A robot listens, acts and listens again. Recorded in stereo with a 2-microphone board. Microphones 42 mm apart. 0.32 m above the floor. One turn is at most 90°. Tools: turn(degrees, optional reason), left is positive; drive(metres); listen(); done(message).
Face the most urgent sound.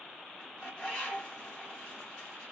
listen()
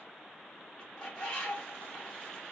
listen()
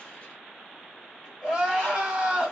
turn(degrees=-30)
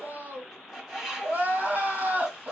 turn(degrees=-90, reason="So it is at 135° right.")
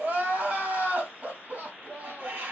turn(degrees=-65, reason="The crying is now 65° right.")
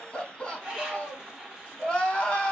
turn(degrees=15, reason="The crying is now 15° left.")
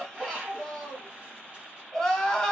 done("Facing the crying, 1 to 2 m away.")